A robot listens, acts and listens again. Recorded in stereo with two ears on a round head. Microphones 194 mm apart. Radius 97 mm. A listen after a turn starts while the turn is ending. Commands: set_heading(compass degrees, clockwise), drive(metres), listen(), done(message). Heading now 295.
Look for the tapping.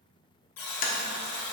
set_heading(255)
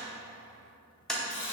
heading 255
done("Found it: tapping, straight ahead, 1 to 2 m away.")